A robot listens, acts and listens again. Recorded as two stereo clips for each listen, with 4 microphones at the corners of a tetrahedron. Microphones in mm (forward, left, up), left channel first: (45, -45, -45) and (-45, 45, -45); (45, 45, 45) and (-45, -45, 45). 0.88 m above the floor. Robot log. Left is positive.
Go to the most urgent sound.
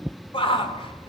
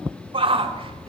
note: The shout: 90° right.
cmd yaw -90
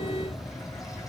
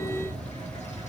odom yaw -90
cmd idle
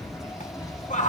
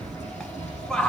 note: The shout is now 40° right.
cmd yaw -40
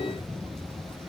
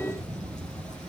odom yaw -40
cmd idle
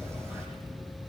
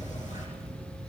cmd idle
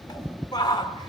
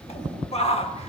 note: The shout is now 10° left.
cmd yaw +10
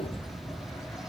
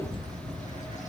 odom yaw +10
cmd idle
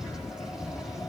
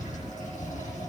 cmd idle
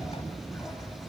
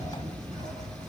end: Facing where the shout came from. I can't hear it now. I did not reach it.